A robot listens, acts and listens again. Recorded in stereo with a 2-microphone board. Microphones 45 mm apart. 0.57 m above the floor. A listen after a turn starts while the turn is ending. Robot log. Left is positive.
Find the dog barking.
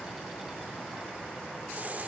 cmd idle
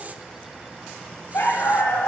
note: The dog barking: about 70° left or 110° left.
cmd yaw +70
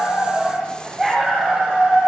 end: Facing the dog barking, over 4 m away.